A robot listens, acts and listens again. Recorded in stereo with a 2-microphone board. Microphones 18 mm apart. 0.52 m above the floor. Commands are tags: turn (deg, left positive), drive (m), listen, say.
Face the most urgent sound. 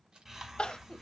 <turn deg="70"/>
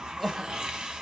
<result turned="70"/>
<say>Facing the crying, under 1 m away.</say>